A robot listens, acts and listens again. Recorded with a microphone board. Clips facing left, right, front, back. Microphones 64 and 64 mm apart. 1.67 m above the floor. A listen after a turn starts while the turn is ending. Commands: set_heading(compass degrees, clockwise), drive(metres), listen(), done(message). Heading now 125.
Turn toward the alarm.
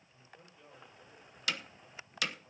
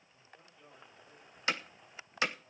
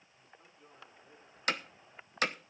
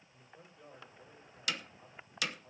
listen()
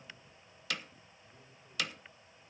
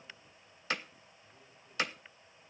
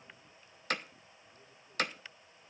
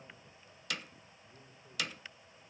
listen()
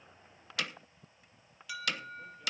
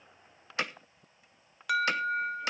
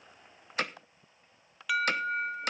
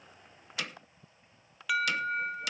set_heading(215)
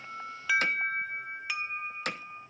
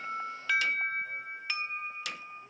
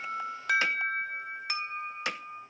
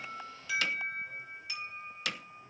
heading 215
done("Facing the alarm, under 1 m away.")